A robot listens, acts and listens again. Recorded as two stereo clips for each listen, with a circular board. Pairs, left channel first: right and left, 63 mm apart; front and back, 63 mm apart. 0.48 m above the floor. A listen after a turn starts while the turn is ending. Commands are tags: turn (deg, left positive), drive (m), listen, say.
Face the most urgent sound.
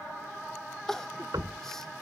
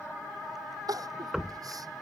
<turn deg="-175"/>
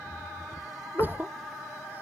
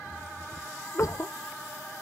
<turn deg="30"/>
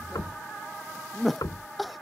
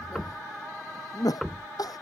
<say>Facing the crying.</say>